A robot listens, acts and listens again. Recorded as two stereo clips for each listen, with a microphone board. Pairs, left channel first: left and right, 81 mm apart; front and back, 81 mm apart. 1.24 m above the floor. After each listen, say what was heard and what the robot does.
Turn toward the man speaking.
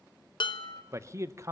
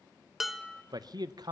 The man speaking: 145° right. Turn 145° right.
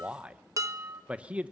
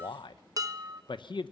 The man speaking is now 15° right. Turn 15° right.
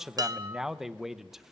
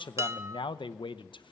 Facing the man speaking.